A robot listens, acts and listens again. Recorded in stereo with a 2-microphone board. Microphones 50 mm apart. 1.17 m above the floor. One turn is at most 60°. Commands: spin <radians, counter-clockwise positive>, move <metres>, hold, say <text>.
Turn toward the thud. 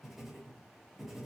hold
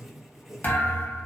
spin 0.61
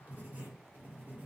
hold
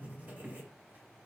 say I heard a thud, but can't make it out now. It was about straight ahead or 110° left.